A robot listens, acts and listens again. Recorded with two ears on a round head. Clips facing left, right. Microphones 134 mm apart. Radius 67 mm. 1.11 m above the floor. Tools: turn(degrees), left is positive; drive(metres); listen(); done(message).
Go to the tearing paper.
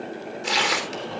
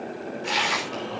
turn(degrees=55)
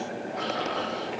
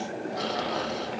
listen()
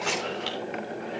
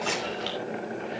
drive(metres=1.0)
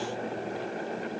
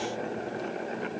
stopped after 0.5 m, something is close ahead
listen()
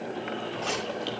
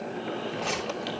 listen()
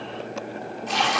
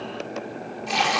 done("Something is in my way. I am facing the tearing paper but have not reached it.")